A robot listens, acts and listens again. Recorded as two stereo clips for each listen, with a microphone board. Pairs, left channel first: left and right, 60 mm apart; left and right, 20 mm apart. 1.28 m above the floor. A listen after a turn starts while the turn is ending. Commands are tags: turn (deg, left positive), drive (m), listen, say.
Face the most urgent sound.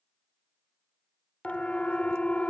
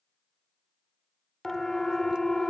<turn deg="20"/>
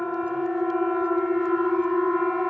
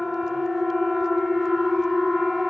<say>Facing the siren.</say>